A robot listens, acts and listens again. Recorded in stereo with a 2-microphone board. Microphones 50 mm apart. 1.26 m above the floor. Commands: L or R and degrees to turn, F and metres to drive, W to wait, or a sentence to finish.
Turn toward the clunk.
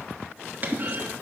R40
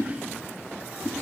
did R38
W
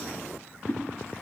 I heard a clunk, but can't make it out now. It was about straight ahead or 105° right.